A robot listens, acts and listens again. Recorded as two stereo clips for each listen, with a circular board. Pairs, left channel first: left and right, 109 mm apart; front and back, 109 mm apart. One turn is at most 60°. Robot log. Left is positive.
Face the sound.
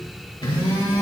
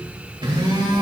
note: The phone buzzing: 135° left.
cmd yaw +60
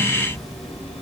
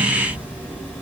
note: Nothing new. It was at 75° left.
cmd yaw +60
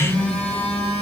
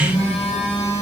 note: The phone buzzing is now 10° left.
cmd yaw +10
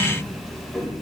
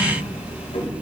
end: Found it: a phone buzzing, straight ahead, 1 to 2 m away.